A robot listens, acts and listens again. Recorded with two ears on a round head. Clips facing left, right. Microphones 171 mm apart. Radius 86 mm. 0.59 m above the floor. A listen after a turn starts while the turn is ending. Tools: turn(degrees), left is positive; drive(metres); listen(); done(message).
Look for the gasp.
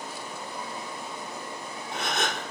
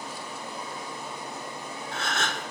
turn(degrees=15)
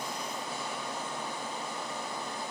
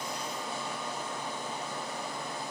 listen()
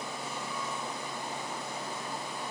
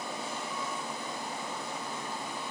done("I heard a gasp, but can't make it out now. It was about straight ahead or 150° left.")